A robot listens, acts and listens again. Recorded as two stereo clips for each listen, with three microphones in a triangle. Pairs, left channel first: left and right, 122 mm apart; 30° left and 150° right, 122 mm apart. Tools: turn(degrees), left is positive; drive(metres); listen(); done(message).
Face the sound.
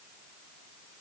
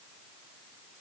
listen()
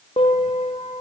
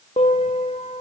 turn(degrees=55)
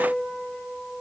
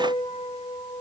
done("Facing the piano, 2 to 4 m away.")